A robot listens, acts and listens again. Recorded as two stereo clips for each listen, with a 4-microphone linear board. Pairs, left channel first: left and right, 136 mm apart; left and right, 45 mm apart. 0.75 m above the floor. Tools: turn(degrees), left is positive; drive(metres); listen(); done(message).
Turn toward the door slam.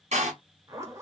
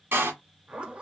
turn(degrees=-60)
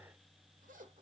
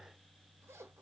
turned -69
listen()
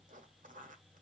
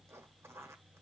done("I heard a door slam, but can't make it out now. It was about 10° left or 50° right.")